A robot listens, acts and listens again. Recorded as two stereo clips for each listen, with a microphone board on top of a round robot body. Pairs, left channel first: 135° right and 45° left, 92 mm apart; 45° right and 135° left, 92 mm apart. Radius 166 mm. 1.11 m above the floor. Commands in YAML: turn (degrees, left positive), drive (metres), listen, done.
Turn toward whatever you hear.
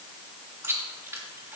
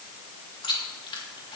turn: -15
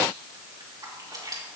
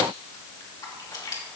done: "Facing the chewing."